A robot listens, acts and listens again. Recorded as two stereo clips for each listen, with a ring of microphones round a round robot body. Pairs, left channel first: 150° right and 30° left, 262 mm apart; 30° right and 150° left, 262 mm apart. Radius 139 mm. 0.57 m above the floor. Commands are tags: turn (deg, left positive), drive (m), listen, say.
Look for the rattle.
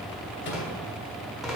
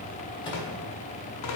<turn deg="-60"/>
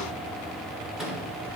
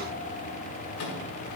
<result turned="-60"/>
<listen/>
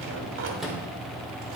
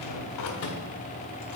<listen/>
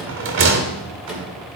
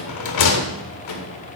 <turn deg="-15"/>
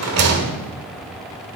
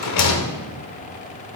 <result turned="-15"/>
<say>Found it: a rattle, straight ahead, 1 to 2 m away.</say>